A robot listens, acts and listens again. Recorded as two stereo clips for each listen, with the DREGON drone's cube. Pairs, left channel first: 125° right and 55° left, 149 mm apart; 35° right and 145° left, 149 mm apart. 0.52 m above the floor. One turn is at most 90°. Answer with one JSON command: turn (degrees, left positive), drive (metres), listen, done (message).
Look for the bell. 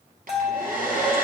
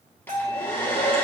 {"turn": 90}
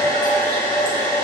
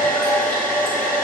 {"turn": 55}
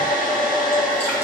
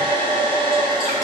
{"listen": true}
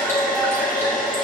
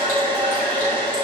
{"done": "Facing where the bell came from. I can't hear it now."}